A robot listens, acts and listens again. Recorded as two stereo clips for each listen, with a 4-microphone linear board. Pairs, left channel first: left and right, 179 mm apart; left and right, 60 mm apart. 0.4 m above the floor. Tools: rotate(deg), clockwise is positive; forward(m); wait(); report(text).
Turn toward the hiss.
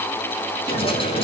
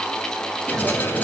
rotate(-30)
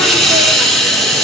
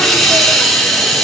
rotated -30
report("Found it: a hiss, straight ahead, over 4 m away.")